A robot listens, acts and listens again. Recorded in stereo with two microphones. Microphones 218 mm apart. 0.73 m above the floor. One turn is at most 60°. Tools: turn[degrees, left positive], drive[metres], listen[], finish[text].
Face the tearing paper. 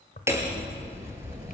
Thought: The tearing paper: about 40° left or 140° left.
Action: turn[40]
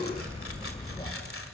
Action: listen[]
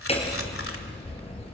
Action: listen[]
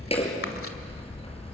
Action: finish[I heard tearing paper, but can't make it out now. It was about straight ahead or 100° left.]